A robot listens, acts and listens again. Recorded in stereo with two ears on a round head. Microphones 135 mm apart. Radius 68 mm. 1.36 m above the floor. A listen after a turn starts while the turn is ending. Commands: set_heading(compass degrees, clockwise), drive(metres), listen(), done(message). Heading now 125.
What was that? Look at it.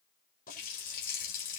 set_heading(65)
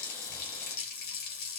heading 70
set_heading(5)
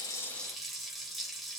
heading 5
done("Found it: a running tap, straight ahead, 2 to 4 m away.")